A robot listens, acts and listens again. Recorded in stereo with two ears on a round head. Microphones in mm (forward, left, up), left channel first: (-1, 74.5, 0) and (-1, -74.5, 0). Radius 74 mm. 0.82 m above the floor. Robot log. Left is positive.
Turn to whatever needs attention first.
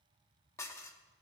cmd idle
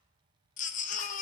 note: The baby crying: about 50° left or 130° left.
cmd yaw +50
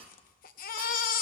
note: So it is at 70° left.
cmd yaw +70
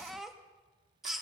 end: Found it: a baby crying, straight ahead.